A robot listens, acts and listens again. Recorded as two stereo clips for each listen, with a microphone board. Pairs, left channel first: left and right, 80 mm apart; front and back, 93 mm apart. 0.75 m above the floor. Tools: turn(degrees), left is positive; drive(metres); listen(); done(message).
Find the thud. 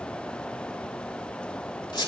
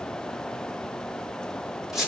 listen()
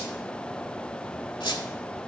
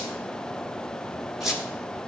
listen()
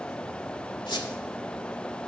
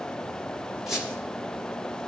done("I can't make out a thud, only a squeak.")